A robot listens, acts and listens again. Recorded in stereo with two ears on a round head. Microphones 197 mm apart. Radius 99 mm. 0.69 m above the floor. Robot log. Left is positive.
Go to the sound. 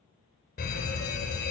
note: The fire alarm: about 45° left or 135° left.
cmd yaw +45
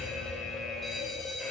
cmd fwd 1.0
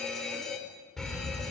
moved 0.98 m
cmd fwd 1.0
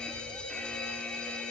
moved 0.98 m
cmd fwd 1.0
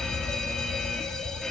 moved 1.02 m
cmd fwd 1.0
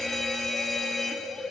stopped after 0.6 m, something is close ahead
end: I am next to the fire alarm.